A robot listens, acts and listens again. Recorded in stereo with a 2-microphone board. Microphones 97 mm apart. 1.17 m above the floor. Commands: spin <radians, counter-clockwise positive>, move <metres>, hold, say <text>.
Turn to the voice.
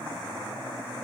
hold
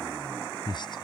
spin 0.87
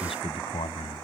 spin 1.31
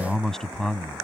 say Found it: a man speaking, straight ahead.